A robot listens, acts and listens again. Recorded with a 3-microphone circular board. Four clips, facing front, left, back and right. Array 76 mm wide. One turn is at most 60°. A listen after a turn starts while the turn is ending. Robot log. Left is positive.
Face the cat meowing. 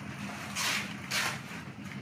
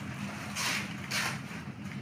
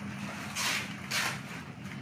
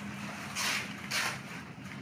cmd idle
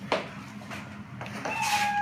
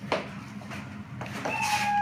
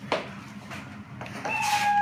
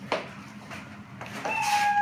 note: The cat meowing: 140° right.
cmd yaw -60
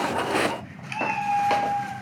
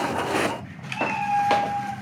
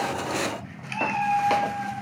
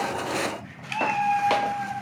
note: The cat meowing is now 100° right.
cmd yaw -60
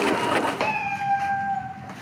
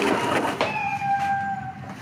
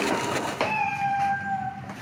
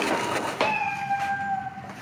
note: The cat meowing is now 50° right.
cmd yaw -50
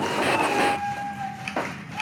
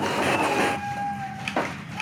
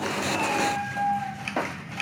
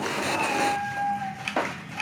end: Found it: a cat meowing, straight ahead.